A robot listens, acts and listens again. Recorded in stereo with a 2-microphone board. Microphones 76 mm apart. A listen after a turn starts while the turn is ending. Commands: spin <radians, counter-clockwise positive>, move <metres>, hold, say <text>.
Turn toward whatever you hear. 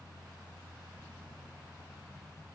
hold
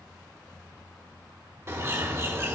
spin -0.52
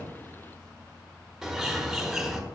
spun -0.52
say Facing the bird.